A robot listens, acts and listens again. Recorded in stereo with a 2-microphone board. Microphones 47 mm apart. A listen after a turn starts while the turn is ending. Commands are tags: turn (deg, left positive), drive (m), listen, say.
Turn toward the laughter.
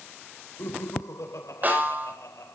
<turn deg="90"/>
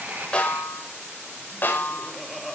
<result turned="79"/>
<say>Found it: laughter, straight ahead.</say>